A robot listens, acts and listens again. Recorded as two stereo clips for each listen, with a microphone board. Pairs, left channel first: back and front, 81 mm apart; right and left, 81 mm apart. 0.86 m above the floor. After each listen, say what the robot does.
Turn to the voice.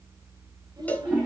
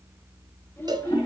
Turn 30° right.
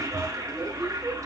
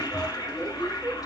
Keep listening.
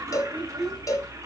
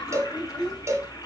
Facing the child speaking.